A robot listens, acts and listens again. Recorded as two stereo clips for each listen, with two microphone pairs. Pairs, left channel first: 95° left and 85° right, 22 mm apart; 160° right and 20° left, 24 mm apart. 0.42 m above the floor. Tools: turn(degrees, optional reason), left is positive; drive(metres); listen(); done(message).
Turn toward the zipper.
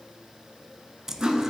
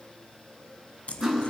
turn(degrees=-150, reason="The zipper: 150° right.")
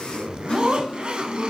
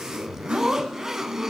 turn(degrees=-45, reason="The zipper is now 45° right.")
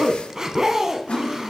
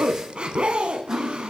turn(degrees=-20, reason="The zipper is now 20° right.")
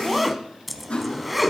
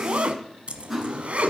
done("Found it: a zipper, straight ahead.")